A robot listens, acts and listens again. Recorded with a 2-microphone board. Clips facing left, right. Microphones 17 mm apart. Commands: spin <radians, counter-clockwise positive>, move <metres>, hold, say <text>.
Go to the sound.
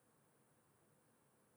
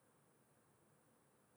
hold
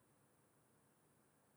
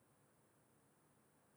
hold
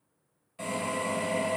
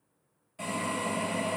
spin 0.52
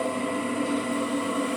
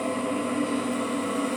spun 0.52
spin 2.62
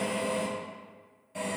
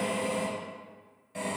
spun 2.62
move 1.0
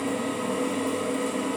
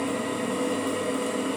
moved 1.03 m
move 1.0
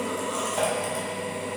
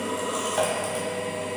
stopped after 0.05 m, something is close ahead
spin -0.17
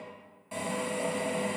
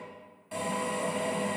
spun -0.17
say Arrived at the drill, straight ahead.